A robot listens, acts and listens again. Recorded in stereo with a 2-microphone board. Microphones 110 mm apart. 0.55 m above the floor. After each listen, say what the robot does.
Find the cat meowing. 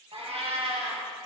Turn 60° right.
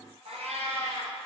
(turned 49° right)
Turn 70° right.
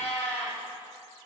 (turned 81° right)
Turn 10° left.
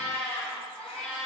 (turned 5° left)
Facing the cat meowing.